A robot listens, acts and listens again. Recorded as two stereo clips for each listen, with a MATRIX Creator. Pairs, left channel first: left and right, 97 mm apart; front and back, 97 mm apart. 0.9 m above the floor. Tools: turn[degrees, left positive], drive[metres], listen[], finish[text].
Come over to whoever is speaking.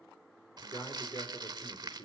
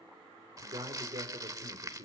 Thought: The man speaking: 145° left.
Action: turn[145]
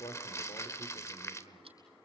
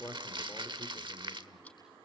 Thought: The man speaking is now 65° left.
Action: turn[65]
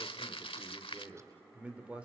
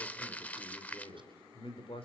Thought: The man speaking is now 10° right.
Action: turn[-10]
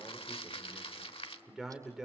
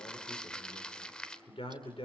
Action: drive[1.0]
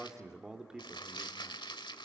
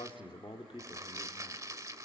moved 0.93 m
Action: drive[1.0]
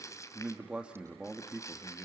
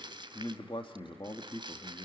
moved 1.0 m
Thought: The man speaking is now 10° right.
Action: turn[-10]
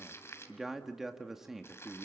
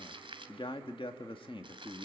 Action: drive[1.0]
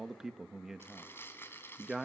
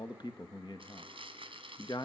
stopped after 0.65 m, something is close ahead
Action: finish[I am next to the man speaking.]